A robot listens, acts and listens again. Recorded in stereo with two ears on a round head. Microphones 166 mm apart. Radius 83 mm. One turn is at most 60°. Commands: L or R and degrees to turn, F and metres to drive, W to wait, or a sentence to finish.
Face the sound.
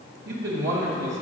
R60
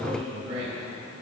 R35
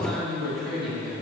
Found it: a man speaking, straight ahead, 2 to 4 m away.